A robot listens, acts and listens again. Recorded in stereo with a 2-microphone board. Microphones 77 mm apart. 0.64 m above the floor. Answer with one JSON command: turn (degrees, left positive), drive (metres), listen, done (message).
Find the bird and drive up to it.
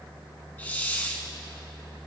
{"listen": true}
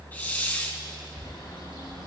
{"turn": 70}
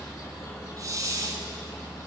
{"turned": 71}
{"listen": true}
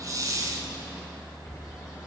{"listen": true}
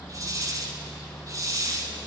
{"done": "I heard a bird, but can't make it out now. It was about straight ahead or 35° left. I did not reach it."}